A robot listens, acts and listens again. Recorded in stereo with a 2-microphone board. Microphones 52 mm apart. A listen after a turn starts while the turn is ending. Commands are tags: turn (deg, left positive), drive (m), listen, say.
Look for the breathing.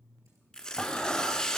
<turn deg="20"/>
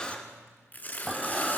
<say>Found it: breathing, straight ahead, 1 to 2 m away.</say>